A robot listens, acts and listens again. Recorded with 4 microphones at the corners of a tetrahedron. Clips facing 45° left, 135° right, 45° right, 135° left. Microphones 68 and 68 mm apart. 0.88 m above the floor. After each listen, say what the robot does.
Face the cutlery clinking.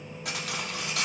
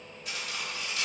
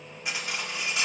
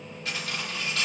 Turn 30° left.
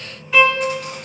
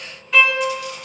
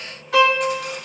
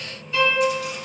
Keep listening.
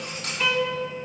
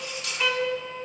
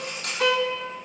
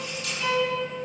Facing the cutlery clinking, 1 to 2 m away.